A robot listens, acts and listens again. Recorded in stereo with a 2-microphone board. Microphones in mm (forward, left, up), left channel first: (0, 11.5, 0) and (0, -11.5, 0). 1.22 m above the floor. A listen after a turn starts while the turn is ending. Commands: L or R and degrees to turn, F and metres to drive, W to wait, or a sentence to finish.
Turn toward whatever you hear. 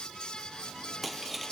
L30
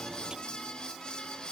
W
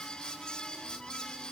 I heard breaking glass, but can't make it out now. It was about 25° right or 145° left.